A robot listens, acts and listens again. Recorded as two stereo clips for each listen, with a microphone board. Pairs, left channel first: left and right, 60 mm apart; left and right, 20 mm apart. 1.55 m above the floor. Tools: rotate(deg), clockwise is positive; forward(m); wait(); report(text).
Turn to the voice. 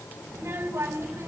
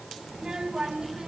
rotate(45)
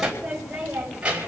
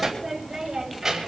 rotate(15)
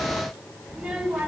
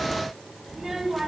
rotate(10)
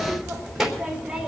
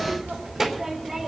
rotate(10)
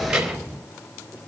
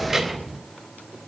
rotate(10)
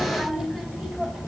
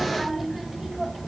report("Facing the child speaking.")